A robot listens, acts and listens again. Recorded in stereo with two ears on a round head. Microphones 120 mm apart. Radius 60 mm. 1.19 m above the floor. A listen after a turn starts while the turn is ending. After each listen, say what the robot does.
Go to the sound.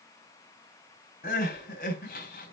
Turn 70° left.
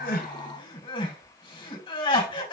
Turn 40° left.
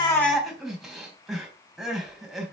Drive 1.0 m forward.
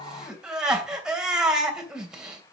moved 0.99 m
Drive 1.0 m forward.
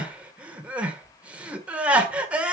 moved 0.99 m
Turn 10° right.
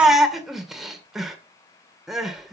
Drive 1.0 m forward.
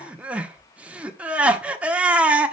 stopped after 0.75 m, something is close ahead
Turn 10° right.
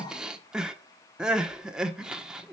I am next to the crying.